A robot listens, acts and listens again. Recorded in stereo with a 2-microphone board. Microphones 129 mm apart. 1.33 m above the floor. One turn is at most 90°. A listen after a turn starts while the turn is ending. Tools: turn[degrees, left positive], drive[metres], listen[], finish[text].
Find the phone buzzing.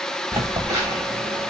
Thought: The phone buzzing: about 30° right or 150° right.
Action: turn[-30]
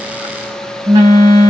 Thought: So it is at 120° right.
Action: turn[-90]
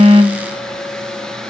Thought: Nothing new. It was at 30° right.
Action: turn[-30]
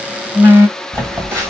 Thought: The phone buzzing is now 20° right.
Action: turn[-20]
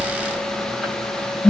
Action: finish[Facing the phone buzzing.]